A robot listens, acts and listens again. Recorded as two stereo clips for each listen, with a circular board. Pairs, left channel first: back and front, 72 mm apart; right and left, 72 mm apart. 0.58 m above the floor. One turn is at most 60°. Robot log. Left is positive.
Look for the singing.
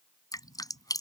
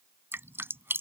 cmd idle
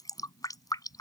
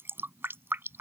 cmd idle
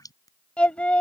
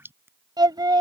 note: The singing: 105° left.
cmd yaw +60
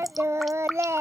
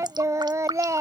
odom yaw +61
note: The singing is now 45° left.
cmd yaw +45
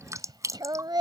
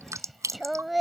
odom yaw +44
end: Facing the singing.